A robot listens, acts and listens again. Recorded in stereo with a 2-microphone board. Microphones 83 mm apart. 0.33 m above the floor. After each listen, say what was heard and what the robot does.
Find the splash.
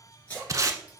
The splash: about 20° left or 160° left. Turn 20° left.
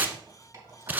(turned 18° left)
Keep listening.
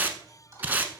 I heard a splash, but can't make it out now. It was about 5° left or 140° left.